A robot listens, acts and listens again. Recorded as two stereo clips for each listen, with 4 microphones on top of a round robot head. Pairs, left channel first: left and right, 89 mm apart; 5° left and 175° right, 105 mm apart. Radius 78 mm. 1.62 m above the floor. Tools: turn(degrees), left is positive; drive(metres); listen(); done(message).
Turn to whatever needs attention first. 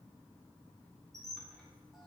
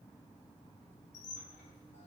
listen()
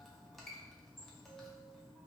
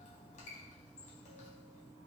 listen()
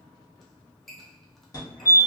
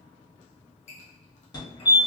turn(degrees=45)
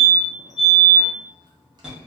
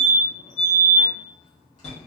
turn(degrees=-10)
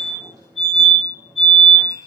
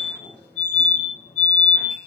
done("Found it: a fire alarm, straight ahead, 1 to 2 m away.")